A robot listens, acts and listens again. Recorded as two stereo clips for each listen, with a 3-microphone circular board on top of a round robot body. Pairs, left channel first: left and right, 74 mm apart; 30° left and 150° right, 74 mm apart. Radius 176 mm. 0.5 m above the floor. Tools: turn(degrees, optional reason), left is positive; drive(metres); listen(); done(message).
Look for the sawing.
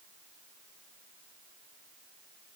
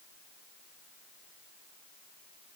listen()
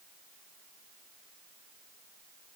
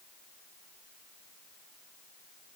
listen()
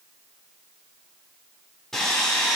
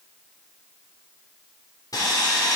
done("Found it: sawing, straight ahead, 2 to 4 m away.")